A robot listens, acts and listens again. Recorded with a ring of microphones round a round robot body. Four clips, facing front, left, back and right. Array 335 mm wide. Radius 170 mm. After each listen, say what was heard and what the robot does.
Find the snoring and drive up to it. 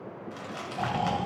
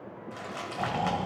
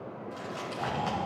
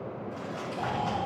The snoring: 35° left. Turn 35° left.
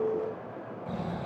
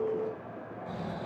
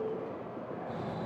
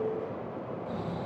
The snoring is now 10° right. Turn 10° right.
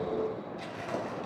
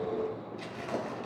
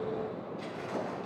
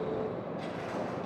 Keep listening.
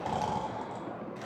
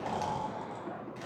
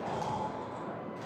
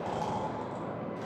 Drive 1.0 m forward.
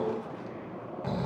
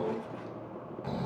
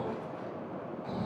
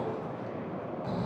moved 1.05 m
Drive 1.0 m forward.
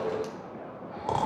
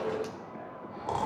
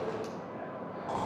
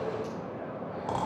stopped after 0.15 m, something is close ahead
Arrived at the snoring, straight ahead.